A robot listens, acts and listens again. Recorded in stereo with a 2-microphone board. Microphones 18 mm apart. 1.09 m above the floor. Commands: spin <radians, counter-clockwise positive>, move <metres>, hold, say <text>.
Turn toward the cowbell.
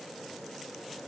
hold
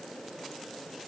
hold
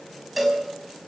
spin 0.52
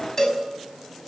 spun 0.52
spin 2.62
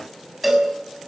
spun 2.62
say Facing the cowbell, over 4 m away.